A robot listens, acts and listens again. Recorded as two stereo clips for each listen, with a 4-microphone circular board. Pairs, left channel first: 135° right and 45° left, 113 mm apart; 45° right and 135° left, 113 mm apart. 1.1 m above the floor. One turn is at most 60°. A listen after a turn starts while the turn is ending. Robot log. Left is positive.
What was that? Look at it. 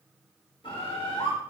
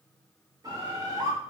note: The bird: 170° right.
cmd yaw -60
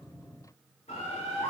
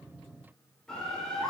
note: The bird is now 130° right.
cmd yaw -60
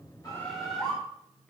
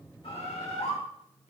note: The bird is now 50° right.
cmd yaw -50
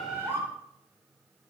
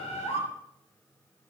note: The bird is now 25° right.
cmd yaw -25
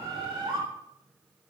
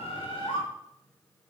end: Found it: a bird, straight ahead, 2 to 4 m away.